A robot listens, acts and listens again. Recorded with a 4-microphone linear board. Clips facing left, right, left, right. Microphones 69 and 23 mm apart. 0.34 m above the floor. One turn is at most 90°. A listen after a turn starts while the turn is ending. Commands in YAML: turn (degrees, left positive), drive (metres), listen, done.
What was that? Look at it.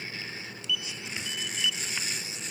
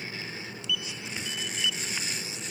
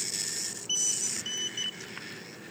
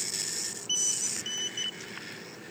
listen: true
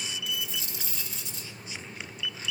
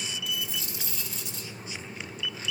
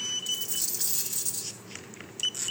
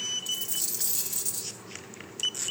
turn: 30
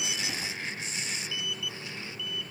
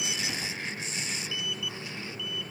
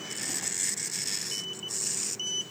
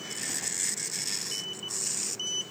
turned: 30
listen: true
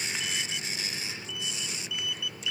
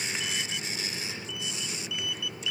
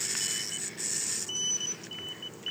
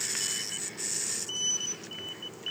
done: "I heard a dropped coin, but can't make it out now. It was about 30° right or 150° left."